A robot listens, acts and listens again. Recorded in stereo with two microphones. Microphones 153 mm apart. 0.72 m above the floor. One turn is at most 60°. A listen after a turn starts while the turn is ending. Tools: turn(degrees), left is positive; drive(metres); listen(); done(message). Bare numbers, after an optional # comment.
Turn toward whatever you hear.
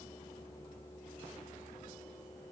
listen()
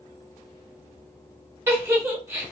# The giggle: about 15° right or 165° right.
turn(-15)
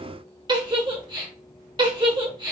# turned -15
# So it is at 150° right.
turn(-60)
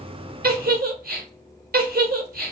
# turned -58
# The giggle is now 90° right.
turn(-60)
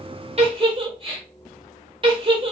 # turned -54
# The giggle is now 35° right.
turn(-35)
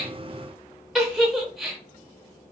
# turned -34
done("Found it: a giggle, straight ahead, under 1 m away.")